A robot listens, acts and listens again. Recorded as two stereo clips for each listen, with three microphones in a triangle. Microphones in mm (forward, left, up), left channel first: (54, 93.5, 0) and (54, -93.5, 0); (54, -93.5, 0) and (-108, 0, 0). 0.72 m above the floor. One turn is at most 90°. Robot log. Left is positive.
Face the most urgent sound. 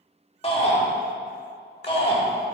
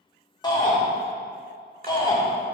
note: The shout: 35° left.
cmd yaw +35
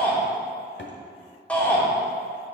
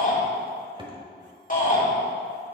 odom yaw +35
note: The shout is now 10° left.
cmd yaw +10
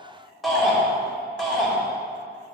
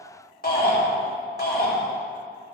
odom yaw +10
end: Facing the shout.